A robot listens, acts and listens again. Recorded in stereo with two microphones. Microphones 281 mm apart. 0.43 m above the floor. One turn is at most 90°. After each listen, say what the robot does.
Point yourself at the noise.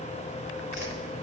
Turn 65° left.
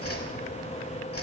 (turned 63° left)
Turn 55° left.
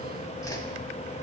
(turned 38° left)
Turn 10° left.
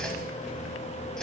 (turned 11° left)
Facing the whoosh, under 1 m away.